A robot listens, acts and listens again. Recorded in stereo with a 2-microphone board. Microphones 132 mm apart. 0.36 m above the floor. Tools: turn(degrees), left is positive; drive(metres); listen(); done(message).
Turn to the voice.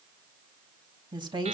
turn(degrees=-35)
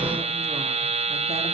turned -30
listen()
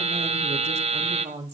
turn(degrees=-110)
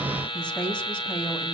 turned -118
turn(degrees=10)
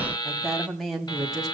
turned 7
done("Facing the woman speaking, 2 to 4 m away.")